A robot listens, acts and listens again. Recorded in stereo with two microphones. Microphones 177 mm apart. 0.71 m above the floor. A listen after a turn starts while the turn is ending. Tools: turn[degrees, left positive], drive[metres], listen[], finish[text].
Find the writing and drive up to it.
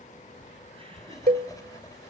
Thought: The writing: about 20° left or 160° left.
Action: turn[20]
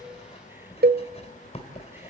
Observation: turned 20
Thought: So it is at 140° left.
Action: turn[140]
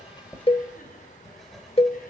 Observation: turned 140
Action: drive[1.0]
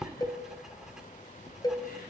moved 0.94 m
Action: drive[1.0]
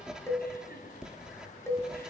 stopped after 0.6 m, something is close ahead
Action: finish[Arrived at the writing, straight ahead.]